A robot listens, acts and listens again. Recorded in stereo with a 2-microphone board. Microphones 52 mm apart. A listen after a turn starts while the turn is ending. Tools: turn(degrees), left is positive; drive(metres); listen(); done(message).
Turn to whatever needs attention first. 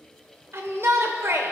turn(degrees=-55)
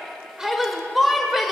done("Facing the shout.")